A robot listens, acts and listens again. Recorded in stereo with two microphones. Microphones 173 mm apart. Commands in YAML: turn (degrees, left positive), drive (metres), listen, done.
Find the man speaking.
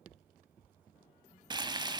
listen: true
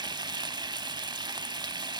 listen: true
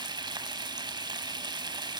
done: "I can't make out a man speaking, only frying."